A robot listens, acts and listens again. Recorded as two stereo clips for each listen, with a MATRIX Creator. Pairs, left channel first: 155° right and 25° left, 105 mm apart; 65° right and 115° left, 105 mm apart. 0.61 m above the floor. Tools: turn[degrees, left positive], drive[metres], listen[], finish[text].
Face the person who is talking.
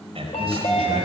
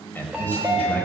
Action: finish[Facing the man speaking, 2 to 4 m away.]